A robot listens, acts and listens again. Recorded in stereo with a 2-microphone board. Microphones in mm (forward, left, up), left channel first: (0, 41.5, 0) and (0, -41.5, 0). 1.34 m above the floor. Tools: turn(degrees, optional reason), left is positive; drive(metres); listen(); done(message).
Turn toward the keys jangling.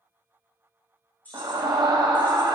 turn(degrees=20, reason="The keys jangling: about 20° left or 160° left.")
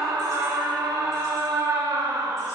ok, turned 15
listen()
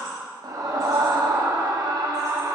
listen()
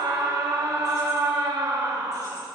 done("I heard keys jangling, but can't make it out now. It was about 5° left or 145° left.")